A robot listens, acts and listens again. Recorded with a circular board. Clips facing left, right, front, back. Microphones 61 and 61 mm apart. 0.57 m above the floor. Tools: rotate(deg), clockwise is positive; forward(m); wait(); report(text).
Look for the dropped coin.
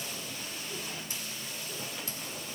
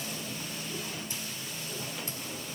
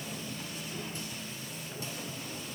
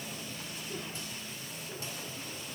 wait()
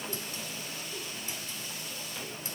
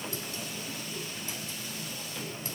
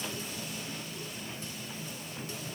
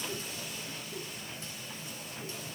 wait()
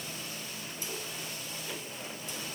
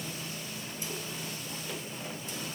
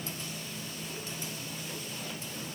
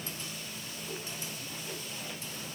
report("I can't make out a dropped coin.")